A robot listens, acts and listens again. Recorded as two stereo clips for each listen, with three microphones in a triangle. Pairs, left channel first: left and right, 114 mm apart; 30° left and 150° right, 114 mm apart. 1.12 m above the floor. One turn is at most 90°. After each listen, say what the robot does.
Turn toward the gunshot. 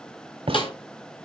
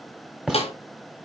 Turn 70° right.
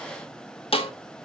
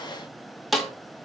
Facing where the gunshot came from. I can't hear it now.